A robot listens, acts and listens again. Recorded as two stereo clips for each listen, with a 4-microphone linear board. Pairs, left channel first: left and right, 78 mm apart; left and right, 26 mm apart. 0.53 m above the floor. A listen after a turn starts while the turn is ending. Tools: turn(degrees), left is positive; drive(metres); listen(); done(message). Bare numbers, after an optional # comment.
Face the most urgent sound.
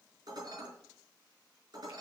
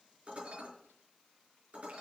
listen()
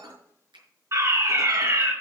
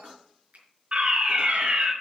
# The fire alarm: about 45° right or 135° right.
turn(-45)
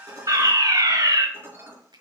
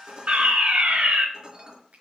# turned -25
# So it is at 105° right.
turn(-105)
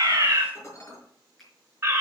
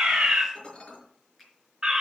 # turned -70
# The fire alarm is now 35° right.
turn(-35)
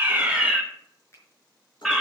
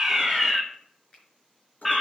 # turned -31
done("Facing the fire alarm.")